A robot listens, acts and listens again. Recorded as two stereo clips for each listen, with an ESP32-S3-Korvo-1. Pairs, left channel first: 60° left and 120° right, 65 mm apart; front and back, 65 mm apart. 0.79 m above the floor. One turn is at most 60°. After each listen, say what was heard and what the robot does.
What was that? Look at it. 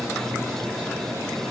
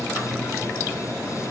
Keep listening.
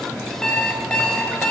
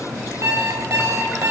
The alarm clock: 140° left. Turn 60° left.
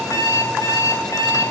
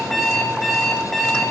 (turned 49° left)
The alarm clock is now 90° left. Turn 60° left.
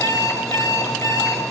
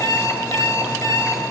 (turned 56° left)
The alarm clock is now 30° left. Turn 30° left.
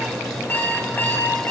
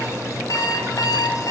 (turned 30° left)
Found it: an alarm clock, straight ahead.